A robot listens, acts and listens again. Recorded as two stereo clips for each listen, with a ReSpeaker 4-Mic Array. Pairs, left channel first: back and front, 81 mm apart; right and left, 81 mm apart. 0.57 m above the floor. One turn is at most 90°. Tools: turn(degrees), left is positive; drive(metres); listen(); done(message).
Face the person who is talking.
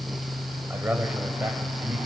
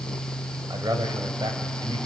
turn(degrees=70)
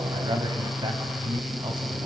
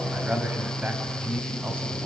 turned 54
turn(degrees=20)
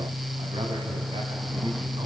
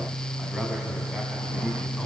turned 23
listen()
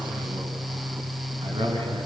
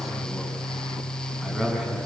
done("Facing the man speaking.")